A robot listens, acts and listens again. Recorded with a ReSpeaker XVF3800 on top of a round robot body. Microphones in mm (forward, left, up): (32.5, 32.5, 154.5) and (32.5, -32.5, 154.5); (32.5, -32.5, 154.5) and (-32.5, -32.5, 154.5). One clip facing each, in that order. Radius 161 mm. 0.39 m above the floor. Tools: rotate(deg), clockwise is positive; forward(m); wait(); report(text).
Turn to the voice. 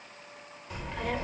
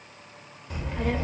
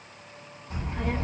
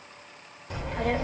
rotate(170)
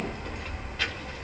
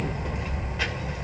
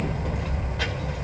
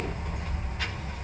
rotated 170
rotate(10)
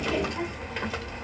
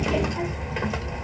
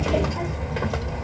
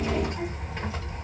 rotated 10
report("Found it: a child speaking, straight ahead, 1 to 2 m away.")